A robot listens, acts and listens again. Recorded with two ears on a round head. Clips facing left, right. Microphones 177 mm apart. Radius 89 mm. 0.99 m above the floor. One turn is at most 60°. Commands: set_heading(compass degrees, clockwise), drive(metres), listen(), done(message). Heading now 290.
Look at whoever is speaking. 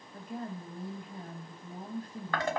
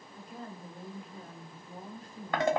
set_heading(240)
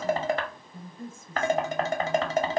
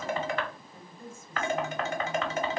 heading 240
set_heading(180)
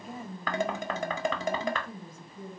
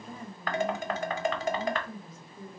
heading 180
set_heading(170)
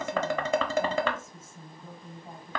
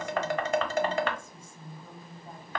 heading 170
done("Facing the woman speaking, 1 to 2 m away.")